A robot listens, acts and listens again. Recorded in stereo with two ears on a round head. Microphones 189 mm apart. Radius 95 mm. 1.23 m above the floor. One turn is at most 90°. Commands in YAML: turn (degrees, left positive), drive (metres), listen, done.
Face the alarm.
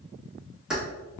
listen: true
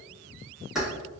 listen: true
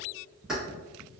done: "I can't make out an alarm to turn to."